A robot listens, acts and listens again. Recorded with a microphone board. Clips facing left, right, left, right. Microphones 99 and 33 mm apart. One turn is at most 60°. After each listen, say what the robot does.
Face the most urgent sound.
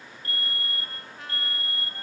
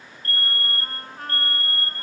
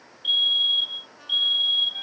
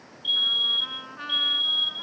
Turn 30° left.
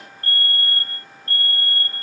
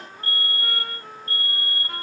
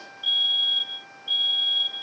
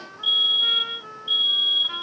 Turn 15° right.
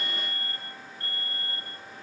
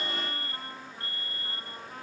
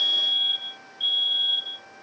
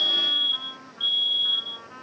Found it: a fire alarm, straight ahead.